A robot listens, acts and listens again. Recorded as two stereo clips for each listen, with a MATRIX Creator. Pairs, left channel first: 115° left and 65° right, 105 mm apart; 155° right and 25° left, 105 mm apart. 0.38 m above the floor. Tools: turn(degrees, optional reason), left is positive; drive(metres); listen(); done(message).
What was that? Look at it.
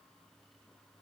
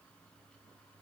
listen()
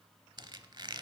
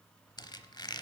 turn(degrees=-110, reason="The squeak: 110° right.")
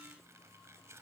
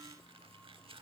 done("Facing the squeak.")